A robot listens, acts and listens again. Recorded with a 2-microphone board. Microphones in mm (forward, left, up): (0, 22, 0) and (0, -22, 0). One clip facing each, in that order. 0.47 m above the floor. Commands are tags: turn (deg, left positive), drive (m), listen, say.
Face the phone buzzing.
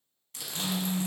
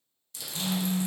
<turn deg="-65"/>
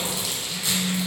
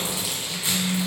<turn deg="-40"/>
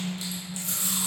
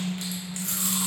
<say>Found it: a phone buzzing, straight ahead, 1 to 2 m away.</say>